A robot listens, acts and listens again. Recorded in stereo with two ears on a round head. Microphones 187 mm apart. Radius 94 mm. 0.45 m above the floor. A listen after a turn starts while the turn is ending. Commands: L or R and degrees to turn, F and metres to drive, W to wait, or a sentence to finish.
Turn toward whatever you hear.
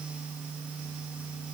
W
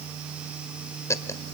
L30
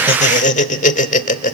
L135
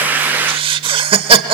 R30
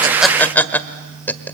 L10
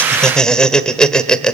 Found it: laughter, straight ahead.